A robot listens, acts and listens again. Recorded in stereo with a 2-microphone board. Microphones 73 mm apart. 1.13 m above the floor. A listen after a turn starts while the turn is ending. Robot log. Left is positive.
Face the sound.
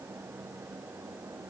cmd idle
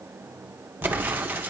note: The explosion: about 25° right or 155° right.
cmd yaw -25
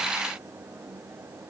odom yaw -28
cmd idle
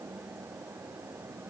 end: I heard an explosion, but can't make it out now. It was about 5° left or 125° right.